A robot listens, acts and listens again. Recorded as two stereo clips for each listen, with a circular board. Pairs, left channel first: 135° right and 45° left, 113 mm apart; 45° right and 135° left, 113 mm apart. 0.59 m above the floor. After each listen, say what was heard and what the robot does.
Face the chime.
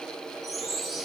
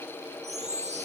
The chime: 135° left. Turn 135° left.
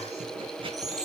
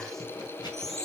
The chime is now 40° left. Turn 40° left.
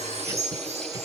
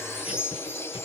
The chime is now 25° left. Turn 25° left.
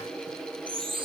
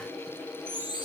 Found it: a chime, straight ahead, over 4 m away.